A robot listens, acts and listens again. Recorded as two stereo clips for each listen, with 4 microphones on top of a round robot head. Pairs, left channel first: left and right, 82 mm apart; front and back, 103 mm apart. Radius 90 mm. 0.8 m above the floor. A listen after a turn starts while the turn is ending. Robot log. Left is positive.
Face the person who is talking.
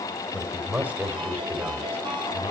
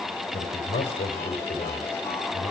note: The man speaking: 25° right.
cmd yaw -25
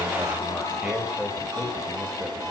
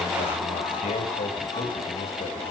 cmd idle
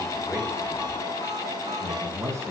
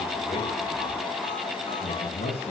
note: The man speaking is now 35° right.
cmd yaw -35
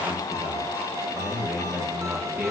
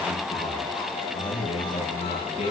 note: The man speaking is now 25° right.
cmd yaw -25
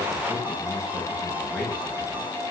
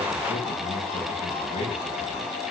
cmd idle
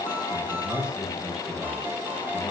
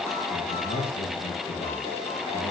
note: The man speaking is now 10° right.
cmd yaw -10
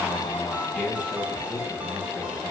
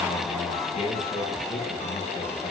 end: Found it: a man speaking, straight ahead, over 4 m away.